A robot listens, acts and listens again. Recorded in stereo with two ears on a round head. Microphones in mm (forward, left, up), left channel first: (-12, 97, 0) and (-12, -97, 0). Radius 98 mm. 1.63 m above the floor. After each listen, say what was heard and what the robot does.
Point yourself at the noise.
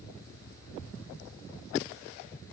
Keep listening.
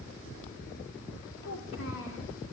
The child speaking: about 60° left or 120° left. Turn 60° left.
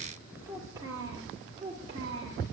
So it is at 25° right. Turn 25° right.
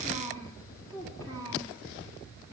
The child speaking is now 15° left. Turn 15° left.
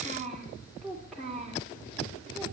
Facing the child speaking.